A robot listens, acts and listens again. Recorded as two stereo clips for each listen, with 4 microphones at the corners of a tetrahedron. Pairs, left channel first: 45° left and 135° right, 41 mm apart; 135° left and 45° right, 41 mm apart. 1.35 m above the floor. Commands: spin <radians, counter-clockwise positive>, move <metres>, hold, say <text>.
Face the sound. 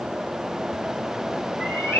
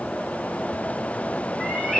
spin 0.79
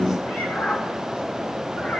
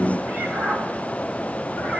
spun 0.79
say Found it: a cat meowing, straight ahead.